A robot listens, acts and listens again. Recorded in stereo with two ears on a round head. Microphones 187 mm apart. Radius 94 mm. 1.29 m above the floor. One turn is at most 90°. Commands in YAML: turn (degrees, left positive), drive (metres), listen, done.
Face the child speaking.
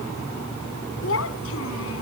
turn: 75
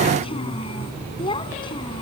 turn: 25
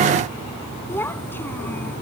turn: 10
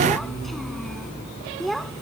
done: "Facing the child speaking."